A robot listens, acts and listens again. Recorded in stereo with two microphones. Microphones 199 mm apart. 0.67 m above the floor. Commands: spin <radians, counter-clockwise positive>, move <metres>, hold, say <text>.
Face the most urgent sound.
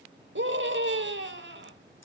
spin -1.13
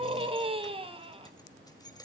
spin -0.52
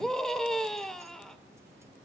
say Found it: a scream, straight ahead.